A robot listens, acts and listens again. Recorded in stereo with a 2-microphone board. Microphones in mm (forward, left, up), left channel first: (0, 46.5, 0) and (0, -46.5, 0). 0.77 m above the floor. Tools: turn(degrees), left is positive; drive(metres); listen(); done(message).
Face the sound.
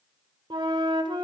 turn(degrees=-75)
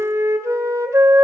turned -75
turn(degrees=-30)
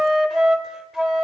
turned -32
done("Facing the flute, 1 to 2 m away.")